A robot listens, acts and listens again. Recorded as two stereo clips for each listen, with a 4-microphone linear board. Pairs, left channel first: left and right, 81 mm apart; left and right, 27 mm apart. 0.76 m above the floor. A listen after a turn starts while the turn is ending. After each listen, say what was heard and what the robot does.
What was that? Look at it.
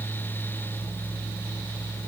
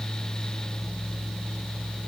Keep listening.
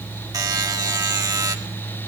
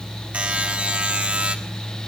The buzzer: about 55° right or 125° right. Turn 55° right.
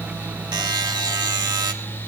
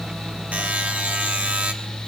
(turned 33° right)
So it is at 85° right. Turn 85° right.
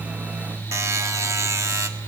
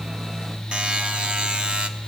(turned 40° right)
The buzzer is now 45° right. Turn 45° right.
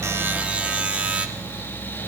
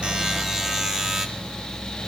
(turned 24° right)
The buzzer is now 20° right. Turn 20° right.
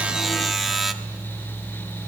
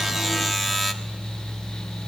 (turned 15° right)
Found it: a buzzer, straight ahead.